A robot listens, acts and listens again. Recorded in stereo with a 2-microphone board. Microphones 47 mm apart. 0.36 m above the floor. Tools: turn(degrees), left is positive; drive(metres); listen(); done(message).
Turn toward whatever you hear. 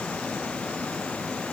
listen()
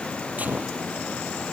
turn(degrees=-35)
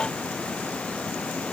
listen()
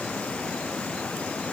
done("I heard a gunshot, but can't make it out now. It was about straight ahead or 110° right.")